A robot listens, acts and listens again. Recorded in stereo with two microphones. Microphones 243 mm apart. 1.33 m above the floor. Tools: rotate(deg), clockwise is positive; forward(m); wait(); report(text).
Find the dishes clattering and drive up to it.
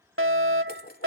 rotate(-40)
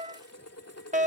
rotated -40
rotate(-100)
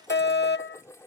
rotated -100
rotate(-10)
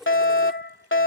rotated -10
forward(1.0)
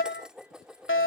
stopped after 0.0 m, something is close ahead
report("Something is in my way. I am facing the dishes clattering but have not reached it.")